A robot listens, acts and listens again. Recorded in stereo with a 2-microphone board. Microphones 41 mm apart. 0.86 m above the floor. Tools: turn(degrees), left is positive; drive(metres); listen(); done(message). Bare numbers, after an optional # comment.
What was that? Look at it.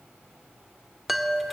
turn(30)
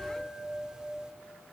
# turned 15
# So it is at 15° right.
turn(-15)
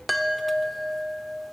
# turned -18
done("Facing the chime.")